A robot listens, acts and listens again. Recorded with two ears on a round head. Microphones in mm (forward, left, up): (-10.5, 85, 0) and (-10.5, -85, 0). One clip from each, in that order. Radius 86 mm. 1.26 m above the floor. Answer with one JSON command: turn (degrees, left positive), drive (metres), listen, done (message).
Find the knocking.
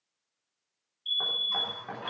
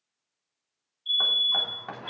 {"turn": -65}
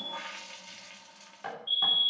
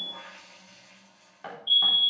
{"done": "Facing the knocking."}